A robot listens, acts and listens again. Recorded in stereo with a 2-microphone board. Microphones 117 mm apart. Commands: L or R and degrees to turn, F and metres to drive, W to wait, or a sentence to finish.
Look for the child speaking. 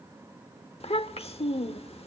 L60
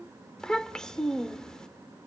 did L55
Found it: a child speaking, straight ahead, under 1 m away.